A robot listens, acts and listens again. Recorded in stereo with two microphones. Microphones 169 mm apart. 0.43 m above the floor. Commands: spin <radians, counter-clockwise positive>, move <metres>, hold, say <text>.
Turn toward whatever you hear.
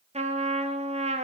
spin -0.70
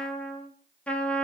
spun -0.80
say Facing the trumpet, 1 to 2 m away.